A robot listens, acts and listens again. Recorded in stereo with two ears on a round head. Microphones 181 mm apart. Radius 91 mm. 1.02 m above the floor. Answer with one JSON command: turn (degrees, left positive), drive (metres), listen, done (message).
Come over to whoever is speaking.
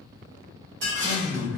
{"turn": -65}
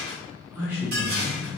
{"turn": -10}
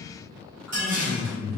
{"drive": 1.0}
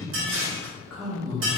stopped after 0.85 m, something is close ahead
{"done": "I am next to the man speaking."}